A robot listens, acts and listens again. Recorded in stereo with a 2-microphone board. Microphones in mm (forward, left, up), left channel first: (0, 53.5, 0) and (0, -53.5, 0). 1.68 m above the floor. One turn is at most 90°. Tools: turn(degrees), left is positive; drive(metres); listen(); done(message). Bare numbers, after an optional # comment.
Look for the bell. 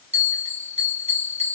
# The bell: about 75° right or 105° right.
turn(-75)
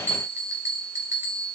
# So it is at 25° right.
turn(-25)
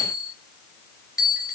done("Facing the bell.")